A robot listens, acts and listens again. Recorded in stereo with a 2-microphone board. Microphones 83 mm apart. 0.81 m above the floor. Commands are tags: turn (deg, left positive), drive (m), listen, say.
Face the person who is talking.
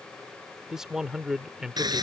<turn deg="-30"/>
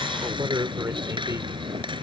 <turn deg="-140"/>
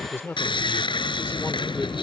<turn deg="30"/>
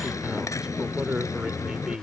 <turn deg="-10"/>
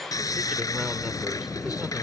<listen/>
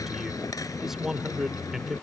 <say>Facing the man speaking.</say>